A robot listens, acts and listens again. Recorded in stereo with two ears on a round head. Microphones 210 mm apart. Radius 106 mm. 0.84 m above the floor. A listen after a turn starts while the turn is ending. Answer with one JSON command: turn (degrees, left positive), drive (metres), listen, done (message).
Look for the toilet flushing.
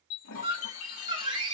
{"turn": 65}
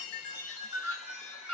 {"listen": true}
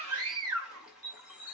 {"done": "Facing the toilet flushing, 2 to 4 m away."}